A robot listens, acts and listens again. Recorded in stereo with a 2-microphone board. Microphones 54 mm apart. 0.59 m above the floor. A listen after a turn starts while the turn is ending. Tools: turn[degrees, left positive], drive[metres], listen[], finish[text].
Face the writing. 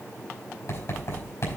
Thought: The writing: about 55° left or 125° left.
Action: turn[55]
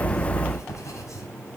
Thought: So it is at 70° left.
Action: turn[70]
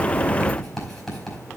Thought: The writing is now 10° left.
Action: turn[10]
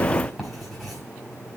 Action: finish[Found it: writing, straight ahead, over 4 m away.]